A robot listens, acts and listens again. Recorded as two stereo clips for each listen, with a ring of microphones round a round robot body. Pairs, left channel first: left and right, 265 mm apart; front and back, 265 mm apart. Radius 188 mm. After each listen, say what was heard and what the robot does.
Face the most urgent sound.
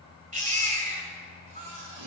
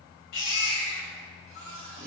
The baby crying: 30° right. Turn 30° right.
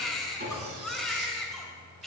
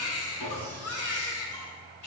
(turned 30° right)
Found it: a baby crying, straight ahead.